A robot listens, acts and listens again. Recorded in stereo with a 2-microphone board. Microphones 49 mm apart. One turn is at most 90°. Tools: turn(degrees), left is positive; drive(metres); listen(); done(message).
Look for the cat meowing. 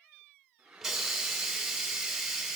listen()
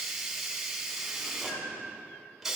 turn(degrees=65)
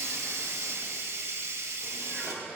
listen()
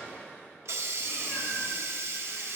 turn(degrees=45)
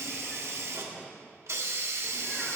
listen()
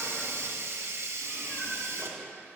listen()
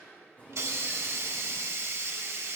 turn(degrees=30)
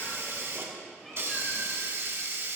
done("Facing the cat meowing, 2 to 4 m away.")